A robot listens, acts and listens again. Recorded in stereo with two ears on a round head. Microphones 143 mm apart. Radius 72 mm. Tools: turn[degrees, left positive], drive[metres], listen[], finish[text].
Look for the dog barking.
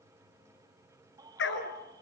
Action: turn[90]
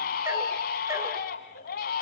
Action: listen[]
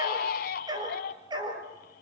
Thought: The dog barking is now 30° right.
Action: turn[-30]
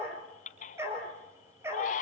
Thought: The dog barking is now 15° right.
Action: turn[-15]
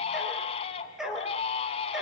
Action: finish[Found it: a dog barking, straight ahead, 2 to 4 m away.]